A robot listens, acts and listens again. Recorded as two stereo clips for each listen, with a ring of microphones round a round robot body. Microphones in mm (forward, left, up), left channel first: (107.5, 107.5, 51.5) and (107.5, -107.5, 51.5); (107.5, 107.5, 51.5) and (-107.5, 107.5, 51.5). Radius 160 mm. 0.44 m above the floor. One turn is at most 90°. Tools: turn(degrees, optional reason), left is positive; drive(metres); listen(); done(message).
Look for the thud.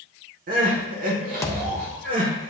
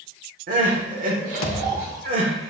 turn(degrees=15, reason="The thud: 15° left.")
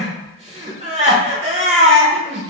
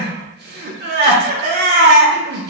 done("Facing where the thud came from. I can't hear it now.")